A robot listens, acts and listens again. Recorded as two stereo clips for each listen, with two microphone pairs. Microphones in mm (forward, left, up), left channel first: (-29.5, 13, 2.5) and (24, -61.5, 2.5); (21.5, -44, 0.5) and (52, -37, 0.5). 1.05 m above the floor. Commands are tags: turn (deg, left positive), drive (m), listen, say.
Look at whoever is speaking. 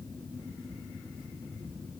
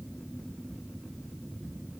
<listen/>
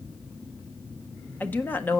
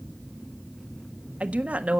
<turn deg="55"/>
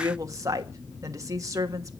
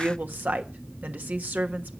<say>Found it: a woman speaking, straight ahead, 1 to 2 m away.</say>